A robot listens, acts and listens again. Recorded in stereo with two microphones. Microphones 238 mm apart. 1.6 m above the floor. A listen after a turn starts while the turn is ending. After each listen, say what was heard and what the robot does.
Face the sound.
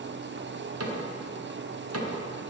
Turn 90° right.
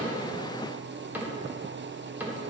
Found it: a cupboard door, straight ahead.